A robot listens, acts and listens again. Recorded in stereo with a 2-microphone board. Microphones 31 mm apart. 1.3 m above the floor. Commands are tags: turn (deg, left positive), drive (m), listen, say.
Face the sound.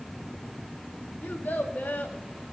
<turn deg="90"/>
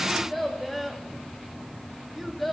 <say>Facing the child speaking.</say>